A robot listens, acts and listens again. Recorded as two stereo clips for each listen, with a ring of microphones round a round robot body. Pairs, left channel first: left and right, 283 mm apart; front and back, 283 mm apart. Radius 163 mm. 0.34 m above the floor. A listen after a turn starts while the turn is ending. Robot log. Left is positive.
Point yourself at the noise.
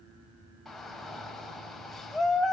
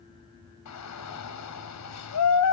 end: Found it: a shout, straight ahead.